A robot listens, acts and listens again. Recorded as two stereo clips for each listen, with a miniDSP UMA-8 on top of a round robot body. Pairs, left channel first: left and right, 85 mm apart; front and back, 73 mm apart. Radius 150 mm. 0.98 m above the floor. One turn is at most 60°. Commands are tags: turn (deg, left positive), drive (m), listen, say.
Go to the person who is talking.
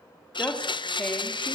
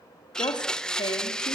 <turn deg="15"/>
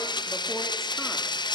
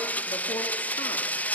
<listen/>
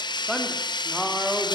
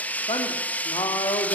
<drive m="1.0"/>
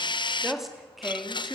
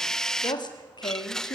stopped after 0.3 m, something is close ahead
<say>Blocked. The woman speaking is further on, straight ahead.</say>